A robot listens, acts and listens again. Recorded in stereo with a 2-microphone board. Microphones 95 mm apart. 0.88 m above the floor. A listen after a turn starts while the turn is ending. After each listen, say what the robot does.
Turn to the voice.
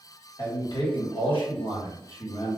Turn 75° left.
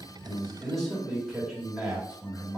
Turn 15° right.
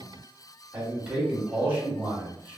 Turn 20° right.
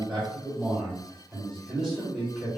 Found it: a man speaking, straight ahead, 2 to 4 m away.